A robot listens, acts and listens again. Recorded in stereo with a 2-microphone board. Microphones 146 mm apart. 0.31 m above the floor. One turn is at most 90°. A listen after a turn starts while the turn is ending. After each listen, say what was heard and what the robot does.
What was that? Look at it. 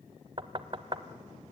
The knocking: about 35° right or 145° right. Turn 35° right.
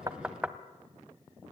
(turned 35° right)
So it is at 10° right. Turn 10° right.
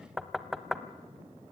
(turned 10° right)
Found it: knocking, straight ahead.